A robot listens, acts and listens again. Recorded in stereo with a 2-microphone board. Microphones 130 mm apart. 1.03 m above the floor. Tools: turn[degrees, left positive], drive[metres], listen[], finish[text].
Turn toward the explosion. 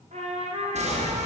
Thought: The explosion: about 55° right or 125° right.
Action: turn[-55]
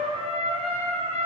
Action: listen[]
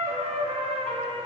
Action: finish[I heard an explosion, but can't make it out now. It was about straight ahead or 70° right.]